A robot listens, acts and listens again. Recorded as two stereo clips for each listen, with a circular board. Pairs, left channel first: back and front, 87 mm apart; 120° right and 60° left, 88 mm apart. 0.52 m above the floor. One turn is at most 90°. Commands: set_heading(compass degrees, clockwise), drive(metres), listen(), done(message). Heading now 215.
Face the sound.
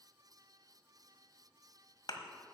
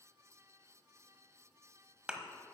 set_heading(125)
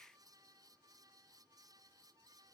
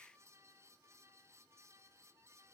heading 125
set_heading(75)
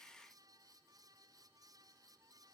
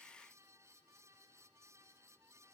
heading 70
done("I heard a thud from this way, but can't make it out now.")